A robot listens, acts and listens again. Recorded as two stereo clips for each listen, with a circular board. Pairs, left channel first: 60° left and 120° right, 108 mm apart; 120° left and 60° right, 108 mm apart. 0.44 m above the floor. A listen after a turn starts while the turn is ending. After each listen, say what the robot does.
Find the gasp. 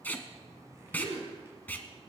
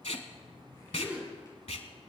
Turn 140° right.
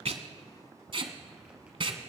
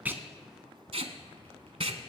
Facing where the gasp came from. I can't hear it now.